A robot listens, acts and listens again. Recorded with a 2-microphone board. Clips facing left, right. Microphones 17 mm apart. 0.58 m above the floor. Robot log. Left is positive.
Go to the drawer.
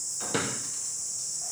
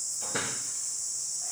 note: The drawer: about 50° left or 130° left.
cmd yaw +50
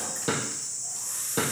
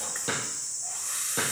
cmd fwd 1.0
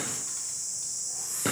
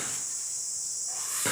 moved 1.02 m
note: The drawer is now 10° right.
cmd yaw -10
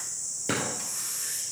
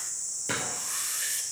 cmd fwd 1.0
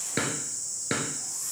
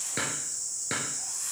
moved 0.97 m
cmd fwd 1.0
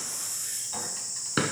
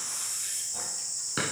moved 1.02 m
note: The drawer is now 10° left.
cmd yaw +10
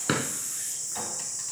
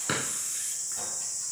cmd fwd 1.0
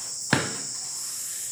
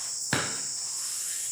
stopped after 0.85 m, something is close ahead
note: The drawer is now 15° left.
cmd yaw +15
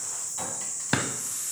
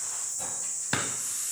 end: Arrived at the drawer, straight ahead.